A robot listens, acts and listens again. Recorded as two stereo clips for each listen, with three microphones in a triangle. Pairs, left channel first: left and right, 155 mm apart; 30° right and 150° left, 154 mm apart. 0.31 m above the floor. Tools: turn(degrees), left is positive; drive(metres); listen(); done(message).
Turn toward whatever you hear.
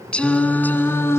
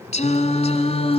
turn(degrees=20)
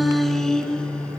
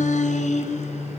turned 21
turn(degrees=10)
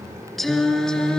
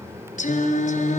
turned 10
done("Facing the singing, 2 to 4 m away.")